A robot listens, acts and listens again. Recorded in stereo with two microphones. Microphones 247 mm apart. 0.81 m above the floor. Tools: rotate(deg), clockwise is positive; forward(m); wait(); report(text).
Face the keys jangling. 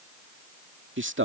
wait()
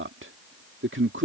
wait()
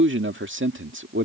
report("I can't make out keys jangling to turn to.")